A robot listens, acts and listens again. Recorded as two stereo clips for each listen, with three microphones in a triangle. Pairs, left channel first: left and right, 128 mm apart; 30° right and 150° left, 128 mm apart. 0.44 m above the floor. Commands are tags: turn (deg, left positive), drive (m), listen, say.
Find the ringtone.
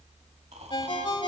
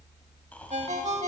<turn deg="135"/>
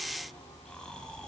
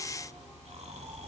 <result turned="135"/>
<listen/>
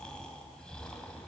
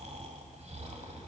<listen/>
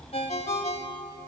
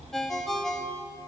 <turn deg="60"/>
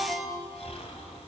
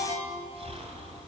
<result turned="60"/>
<say>Found it: a ringtone, straight ahead, 1 to 2 m away.</say>